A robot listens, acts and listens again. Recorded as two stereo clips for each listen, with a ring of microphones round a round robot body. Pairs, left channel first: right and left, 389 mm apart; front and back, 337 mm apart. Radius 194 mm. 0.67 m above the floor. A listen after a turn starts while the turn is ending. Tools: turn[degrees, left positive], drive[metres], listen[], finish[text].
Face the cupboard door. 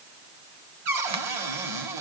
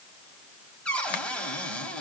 Thought: The cupboard door: 85° left.
Action: turn[85]
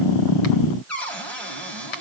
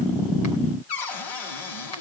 Action: finish[Found it: a cupboard door, straight ahead, over 4 m away.]